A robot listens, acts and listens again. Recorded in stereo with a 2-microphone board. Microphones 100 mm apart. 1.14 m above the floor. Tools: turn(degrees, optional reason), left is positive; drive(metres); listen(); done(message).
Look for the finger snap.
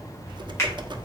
turn(degrees=30, reason="The finger snap: about 30° left or 150° left.")
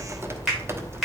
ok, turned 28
done("Facing the finger snap.")